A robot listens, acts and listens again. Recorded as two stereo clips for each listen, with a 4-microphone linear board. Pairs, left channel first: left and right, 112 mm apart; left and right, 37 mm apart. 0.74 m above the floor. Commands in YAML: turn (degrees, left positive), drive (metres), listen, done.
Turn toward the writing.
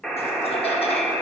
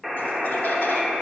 listen: true
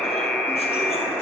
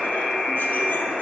listen: true
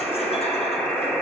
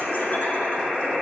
done: "I can't make out writing, only a buzzer."